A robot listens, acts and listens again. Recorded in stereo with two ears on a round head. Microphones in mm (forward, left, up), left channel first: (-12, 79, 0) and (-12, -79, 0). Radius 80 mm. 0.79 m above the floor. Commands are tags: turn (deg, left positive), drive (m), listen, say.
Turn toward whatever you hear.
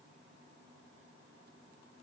<listen/>
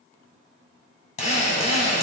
<turn deg="35"/>
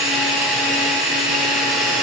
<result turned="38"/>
<say>Found it: a drill, straight ahead.</say>